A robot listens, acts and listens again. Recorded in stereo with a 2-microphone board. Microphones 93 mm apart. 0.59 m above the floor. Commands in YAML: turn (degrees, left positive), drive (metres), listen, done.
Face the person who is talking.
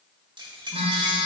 listen: true
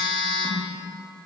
listen: true
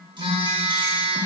done: "I can't make out anyone speaking to turn to."